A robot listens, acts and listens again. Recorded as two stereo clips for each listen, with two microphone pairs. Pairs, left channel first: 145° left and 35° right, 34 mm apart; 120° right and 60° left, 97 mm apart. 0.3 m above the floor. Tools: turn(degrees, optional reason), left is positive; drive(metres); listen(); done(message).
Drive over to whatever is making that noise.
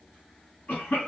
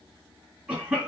turn(degrees=140, reason="The cough: 140° left.")
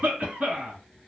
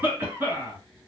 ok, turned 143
drive(metres=1.0)
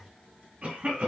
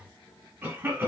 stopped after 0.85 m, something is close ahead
done("Arrived at the cough, straight ahead.")